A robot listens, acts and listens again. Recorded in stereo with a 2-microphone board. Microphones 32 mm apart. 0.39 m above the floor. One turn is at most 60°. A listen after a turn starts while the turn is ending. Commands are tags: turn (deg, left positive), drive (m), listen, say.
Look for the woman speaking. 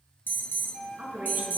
<turn deg="-60"/>
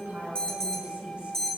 <turn deg="-40"/>
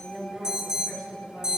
<turn deg="-15"/>
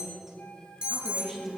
<turn deg="-10"/>
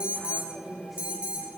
<say>Facing the woman speaking, over 4 m away.</say>